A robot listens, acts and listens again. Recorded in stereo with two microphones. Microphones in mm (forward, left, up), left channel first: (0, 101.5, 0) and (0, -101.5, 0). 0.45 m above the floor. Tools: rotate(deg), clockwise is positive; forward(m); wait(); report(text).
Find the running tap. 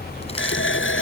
rotate(-90)
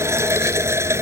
rotate(15)
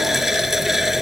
report("Found it: a running tap, straight ahead.")